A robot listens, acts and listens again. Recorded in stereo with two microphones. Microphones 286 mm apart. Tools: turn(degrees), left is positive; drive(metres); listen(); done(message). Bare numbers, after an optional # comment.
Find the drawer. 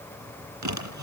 turn(-90)
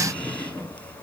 done("Found it: a drawer, straight ahead.")